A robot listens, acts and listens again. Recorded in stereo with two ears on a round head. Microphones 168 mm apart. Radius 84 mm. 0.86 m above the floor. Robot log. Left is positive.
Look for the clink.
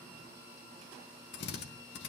cmd idle
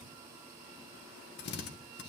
cmd idle
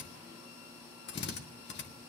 end: I can't make out a clink to turn to.